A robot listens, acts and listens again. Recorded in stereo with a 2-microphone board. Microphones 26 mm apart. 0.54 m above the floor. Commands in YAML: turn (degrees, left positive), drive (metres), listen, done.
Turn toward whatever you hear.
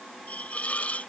turn: 90
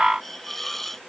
turn: 10
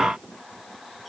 listen: true
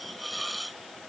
done: "Found it: a hiss, straight ahead."